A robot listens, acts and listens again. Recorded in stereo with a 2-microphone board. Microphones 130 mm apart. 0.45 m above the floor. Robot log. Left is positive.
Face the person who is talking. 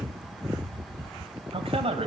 note: The man speaking: about 55° right or 125° right.
cmd yaw -55
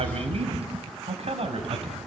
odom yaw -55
note: So it is at 55° right.
cmd yaw -55
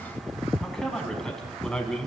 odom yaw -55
end: Facing the man speaking.